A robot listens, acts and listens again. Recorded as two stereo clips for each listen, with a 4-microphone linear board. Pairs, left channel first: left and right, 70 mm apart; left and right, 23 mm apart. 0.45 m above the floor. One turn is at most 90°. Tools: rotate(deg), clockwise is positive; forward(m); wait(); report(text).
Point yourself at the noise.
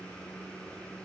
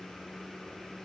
wait()
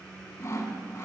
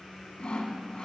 rotate(-45)
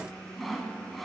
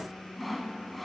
report("Found it: sawing, straight ahead, under 1 m away.")